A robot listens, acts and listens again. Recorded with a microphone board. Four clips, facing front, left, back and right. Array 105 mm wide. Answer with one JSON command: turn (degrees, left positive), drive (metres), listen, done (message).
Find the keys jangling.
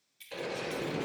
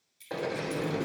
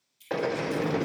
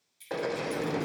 {"turn": 10}
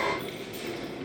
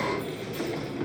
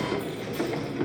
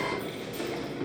{"listen": true}
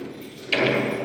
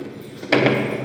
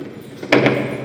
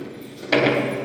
{"listen": true}
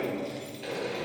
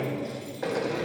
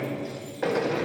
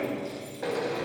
{"done": "Facing where the keys jangling came from. I can't hear it now."}